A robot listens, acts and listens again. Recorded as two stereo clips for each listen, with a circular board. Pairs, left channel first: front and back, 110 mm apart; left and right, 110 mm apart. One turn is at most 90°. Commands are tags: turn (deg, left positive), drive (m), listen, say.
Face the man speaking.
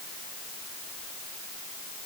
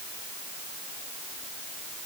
<listen/>
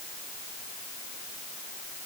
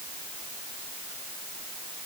<listen/>
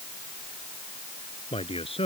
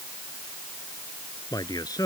<turn deg="35"/>
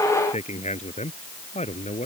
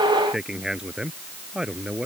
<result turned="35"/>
<turn deg="-10"/>
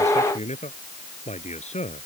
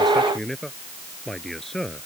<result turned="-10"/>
<say>Facing the man speaking.</say>